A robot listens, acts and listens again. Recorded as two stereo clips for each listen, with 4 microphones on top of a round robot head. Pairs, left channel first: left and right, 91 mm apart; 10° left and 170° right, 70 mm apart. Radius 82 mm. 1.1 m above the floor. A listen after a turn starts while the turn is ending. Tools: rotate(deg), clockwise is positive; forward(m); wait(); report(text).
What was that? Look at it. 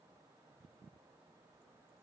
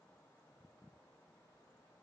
wait()
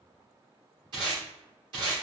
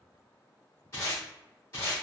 rotate(55)
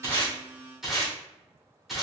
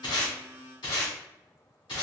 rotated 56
report("Found it: tape being pulled, straight ahead.")